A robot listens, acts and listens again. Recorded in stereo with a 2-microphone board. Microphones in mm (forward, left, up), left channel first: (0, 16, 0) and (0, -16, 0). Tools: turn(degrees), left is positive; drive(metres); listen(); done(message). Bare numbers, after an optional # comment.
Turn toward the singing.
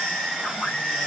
listen()
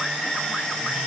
listen()
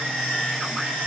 done("I can't make out singing.")